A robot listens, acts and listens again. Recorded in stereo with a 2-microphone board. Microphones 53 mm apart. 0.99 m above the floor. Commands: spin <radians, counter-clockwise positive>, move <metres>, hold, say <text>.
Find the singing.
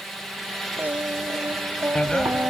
spin -0.52
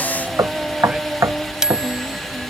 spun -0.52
say Facing the singing.